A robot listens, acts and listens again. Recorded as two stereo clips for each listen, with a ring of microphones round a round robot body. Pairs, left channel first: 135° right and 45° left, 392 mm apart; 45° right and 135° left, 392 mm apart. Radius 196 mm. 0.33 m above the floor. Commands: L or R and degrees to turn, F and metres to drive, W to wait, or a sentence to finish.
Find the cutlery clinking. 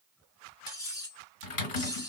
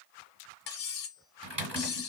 R55
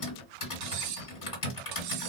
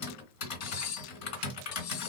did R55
Facing the cutlery clinking, under 1 m away.